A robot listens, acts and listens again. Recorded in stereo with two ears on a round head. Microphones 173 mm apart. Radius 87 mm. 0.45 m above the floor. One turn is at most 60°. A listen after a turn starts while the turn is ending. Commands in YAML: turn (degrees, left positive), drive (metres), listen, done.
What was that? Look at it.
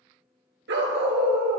turn: -60
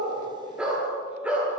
turn: -10
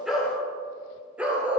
done: "Found it: a dog barking, straight ahead, 2 to 4 m away."